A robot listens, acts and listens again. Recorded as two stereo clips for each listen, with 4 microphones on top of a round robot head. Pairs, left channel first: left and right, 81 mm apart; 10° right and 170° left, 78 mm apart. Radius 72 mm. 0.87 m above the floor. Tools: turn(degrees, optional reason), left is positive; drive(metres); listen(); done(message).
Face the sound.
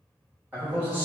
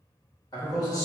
turn(degrees=-25, reason="The man speaking: 25° right.")
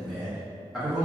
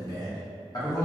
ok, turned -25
turn(degrees=-10, reason="The man speaking is now 10° right.")
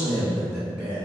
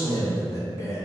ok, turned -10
turn(degrees=-20, reason="The man speaking is now 20° right.")
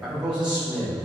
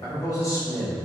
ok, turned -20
turn(degrees=-30, reason="The man speaking is now 30° right.")
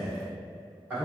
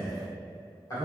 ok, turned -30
turn(degrees=-25, reason="The man speaking is now 25° right.")
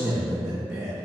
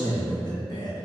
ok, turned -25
done("Facing the man speaking.")